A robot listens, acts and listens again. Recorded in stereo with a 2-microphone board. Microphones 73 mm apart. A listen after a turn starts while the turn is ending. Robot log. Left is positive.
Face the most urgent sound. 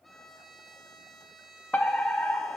note: The fire alarm: about 20° left or 160° left.
cmd yaw +20
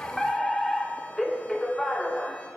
end: Found it: a fire alarm, straight ahead.